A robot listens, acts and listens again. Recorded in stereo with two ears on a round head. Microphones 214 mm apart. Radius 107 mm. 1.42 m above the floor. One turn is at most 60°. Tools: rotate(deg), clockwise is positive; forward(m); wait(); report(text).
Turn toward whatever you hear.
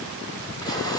wait()
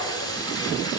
rotate(-15)
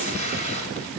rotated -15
rotate(-60)
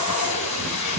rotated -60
rotate(-60)
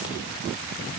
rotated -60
rotate(-20)
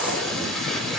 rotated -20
report("Found it: tape being pulled, straight ahead, over 4 m away.")